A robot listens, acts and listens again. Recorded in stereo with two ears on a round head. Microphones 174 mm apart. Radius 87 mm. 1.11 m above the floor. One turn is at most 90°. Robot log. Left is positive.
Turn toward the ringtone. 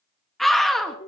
note: The ringtone: about 30° left or 150° left.
cmd yaw +30
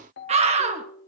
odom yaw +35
note: So it is at 110° left.
cmd yaw +90
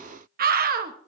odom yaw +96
note: Nothing new. It was at 15° left.
cmd yaw +15
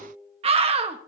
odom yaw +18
end: Facing the ringtone, 1 to 2 m away.